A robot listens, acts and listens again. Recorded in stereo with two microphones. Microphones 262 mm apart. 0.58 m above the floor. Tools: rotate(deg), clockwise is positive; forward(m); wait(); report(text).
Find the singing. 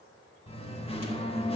rotate(-20)
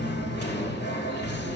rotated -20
rotate(-140)
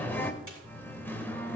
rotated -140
rotate(-10)
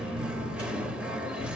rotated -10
report("Facing the singing.")